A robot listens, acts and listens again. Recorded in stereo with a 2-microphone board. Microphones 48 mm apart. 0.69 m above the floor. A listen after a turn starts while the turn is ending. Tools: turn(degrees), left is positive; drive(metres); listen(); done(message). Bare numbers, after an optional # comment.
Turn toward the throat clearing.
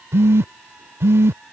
listen()
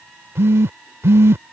listen()
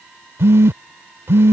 done("I can't make out throat clearing to turn to.")